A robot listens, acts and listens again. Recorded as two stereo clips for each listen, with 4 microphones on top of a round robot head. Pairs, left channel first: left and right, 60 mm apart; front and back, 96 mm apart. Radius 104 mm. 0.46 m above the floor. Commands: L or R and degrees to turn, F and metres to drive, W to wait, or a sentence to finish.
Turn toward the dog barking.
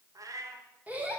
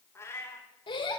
W
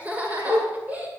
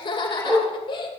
R125
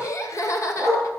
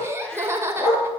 Found it: a dog barking, straight ahead, over 4 m away.